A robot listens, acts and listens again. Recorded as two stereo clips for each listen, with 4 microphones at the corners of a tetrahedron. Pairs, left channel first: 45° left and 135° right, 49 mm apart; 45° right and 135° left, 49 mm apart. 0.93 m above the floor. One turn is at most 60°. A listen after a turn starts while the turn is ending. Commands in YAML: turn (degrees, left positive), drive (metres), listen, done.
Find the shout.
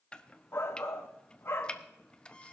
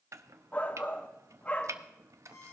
turn: 15
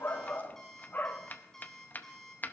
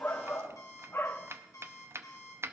done: "Found it: a shout, straight ahead, 1 to 2 m away."